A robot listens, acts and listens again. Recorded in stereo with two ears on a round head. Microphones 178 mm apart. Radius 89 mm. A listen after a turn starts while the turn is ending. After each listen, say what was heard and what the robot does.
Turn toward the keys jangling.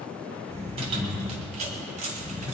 The keys jangling: about 35° right or 145° right. Turn 35° right.
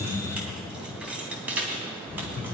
So it is at 10° right. Turn 10° right.
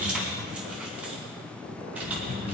The keys jangling is now 10° right. Turn 10° right.
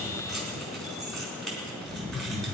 Facing the keys jangling, 2 to 4 m away.